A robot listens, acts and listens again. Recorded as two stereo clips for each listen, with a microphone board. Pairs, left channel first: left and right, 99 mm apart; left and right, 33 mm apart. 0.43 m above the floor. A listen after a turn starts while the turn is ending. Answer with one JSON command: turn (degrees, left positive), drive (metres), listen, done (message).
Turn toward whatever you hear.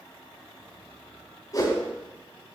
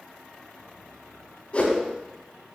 {"turn": 40}
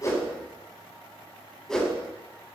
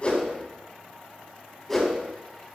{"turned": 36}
{"done": "Found it: a whoosh, straight ahead, 2 to 4 m away."}